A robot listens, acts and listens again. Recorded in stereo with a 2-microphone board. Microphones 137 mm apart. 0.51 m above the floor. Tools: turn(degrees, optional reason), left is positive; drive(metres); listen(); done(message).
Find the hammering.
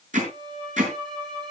turn(degrees=-60, reason="The hammering: about 60° right or 120° right.")
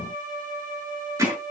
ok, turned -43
turn(degrees=-20, reason="So it is at 20° right.")
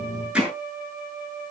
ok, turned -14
turn(degrees=-10, reason="The hammering is now 10° right.")
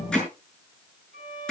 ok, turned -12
done("Found it: hammering, straight ahead.")